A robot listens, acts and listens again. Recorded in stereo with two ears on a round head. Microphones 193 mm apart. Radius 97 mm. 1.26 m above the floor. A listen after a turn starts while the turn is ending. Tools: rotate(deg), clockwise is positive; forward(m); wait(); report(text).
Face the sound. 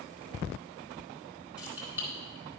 rotate(30)
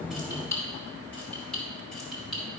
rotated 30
rotate(-30)
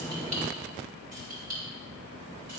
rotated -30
rotate(45)
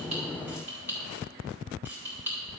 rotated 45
rotate(10)
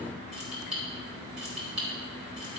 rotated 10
report("Facing the keys jangling, over 4 m away.")